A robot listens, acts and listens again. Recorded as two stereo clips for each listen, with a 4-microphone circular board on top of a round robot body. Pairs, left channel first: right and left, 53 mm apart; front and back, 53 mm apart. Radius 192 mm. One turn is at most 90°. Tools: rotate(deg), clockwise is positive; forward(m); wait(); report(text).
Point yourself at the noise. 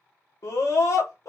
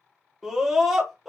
rotate(90)
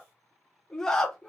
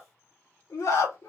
rotate(10)
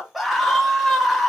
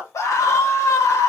report("Found it: a scream, straight ahead, 1 to 2 m away.")